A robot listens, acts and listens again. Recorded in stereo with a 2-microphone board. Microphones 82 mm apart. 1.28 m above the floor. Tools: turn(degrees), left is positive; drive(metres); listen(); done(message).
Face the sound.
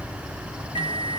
turn(degrees=90)
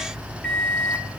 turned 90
turn(degrees=10)
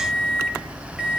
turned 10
done("Found it: a microwave, straight ahead.")